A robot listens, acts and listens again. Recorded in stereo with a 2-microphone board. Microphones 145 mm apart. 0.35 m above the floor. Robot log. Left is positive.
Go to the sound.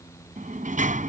note: The sliding door: about 65° right or 115° right.
cmd yaw -65
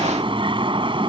note: So it is at 40° right.
cmd yaw -40
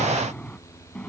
note: The sliding door is now 10° left.
cmd yaw +10
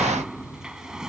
cmd fwd 1.0
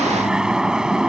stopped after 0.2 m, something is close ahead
end: Something is in my way. I am facing the sliding door but have not reached it.